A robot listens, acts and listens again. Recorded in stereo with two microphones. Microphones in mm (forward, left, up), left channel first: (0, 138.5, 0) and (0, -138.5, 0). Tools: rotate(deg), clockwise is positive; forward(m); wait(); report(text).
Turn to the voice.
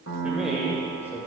rotate(-30)
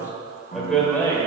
rotate(-30)
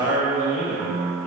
rotate(-30)
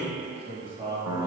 rotate(15)
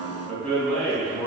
rotate(-10)
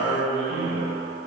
report("Found it: a man speaking, straight ahead.")